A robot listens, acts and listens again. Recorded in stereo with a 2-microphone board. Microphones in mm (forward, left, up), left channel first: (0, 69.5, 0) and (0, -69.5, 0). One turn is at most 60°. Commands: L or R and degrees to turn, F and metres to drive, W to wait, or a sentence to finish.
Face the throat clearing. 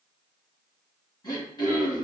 L30
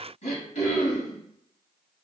L60
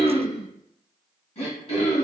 L50
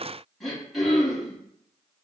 Facing the throat clearing, 1 to 2 m away.